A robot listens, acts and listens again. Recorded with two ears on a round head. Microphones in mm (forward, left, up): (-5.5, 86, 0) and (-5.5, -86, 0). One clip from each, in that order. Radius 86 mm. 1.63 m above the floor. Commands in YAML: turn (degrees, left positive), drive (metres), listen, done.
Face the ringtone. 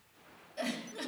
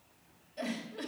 listen: true
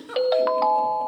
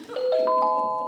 turn: 60
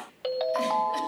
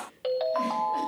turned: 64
turn: 15
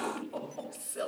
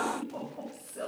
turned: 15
listen: true
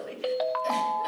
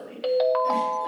done: "Found it: a ringtone, straight ahead, 1 to 2 m away."